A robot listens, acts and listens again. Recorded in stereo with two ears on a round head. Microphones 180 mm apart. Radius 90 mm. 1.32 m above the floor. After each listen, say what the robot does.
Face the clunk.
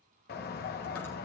Keep listening.
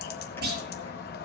Turn 50° right.
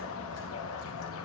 Keep listening.
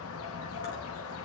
I heard a clunk, but can't make it out now. It was about straight ahead or 80° right.